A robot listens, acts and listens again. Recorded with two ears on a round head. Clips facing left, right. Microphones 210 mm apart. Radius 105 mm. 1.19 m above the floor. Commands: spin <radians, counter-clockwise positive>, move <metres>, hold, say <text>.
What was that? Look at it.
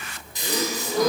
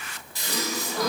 spin 0.26
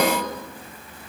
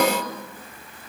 say Facing the gasp, 1 to 2 m away.